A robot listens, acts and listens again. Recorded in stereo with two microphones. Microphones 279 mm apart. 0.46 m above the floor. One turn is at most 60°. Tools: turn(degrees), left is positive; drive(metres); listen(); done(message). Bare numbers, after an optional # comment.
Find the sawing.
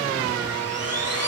# The sawing: about 60° right or 120° right.
turn(-60)
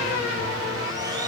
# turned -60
listen()
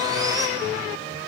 listen()
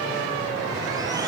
done("I heard sawing, but can't make it out now. It was about straight ahead or 60° right.")